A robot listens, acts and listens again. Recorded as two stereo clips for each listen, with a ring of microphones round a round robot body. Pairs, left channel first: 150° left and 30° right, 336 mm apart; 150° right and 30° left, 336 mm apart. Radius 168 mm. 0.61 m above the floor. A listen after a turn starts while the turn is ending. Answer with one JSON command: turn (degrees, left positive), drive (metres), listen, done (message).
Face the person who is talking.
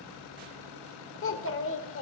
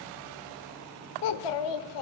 {"turn": -155}
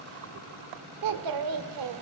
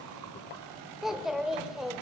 {"turn": -60}
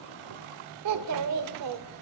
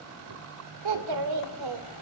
{"turn": 10}
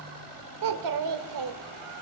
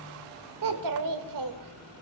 {"done": "Found it: a child speaking, straight ahead, 1 to 2 m away."}